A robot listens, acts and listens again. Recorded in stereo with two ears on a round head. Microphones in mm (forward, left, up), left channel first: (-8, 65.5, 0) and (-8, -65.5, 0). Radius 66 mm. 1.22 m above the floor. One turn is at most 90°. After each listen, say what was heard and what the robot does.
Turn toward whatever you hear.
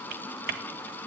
The typing on a keyboard: about 70° right or 110° right. Turn 70° right.
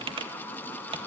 So it is at 35° right. Turn 35° right.
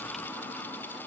Keep listening.
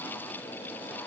Keep listening.
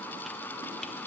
Facing where the typing on a keyboard came from. I can't hear it now.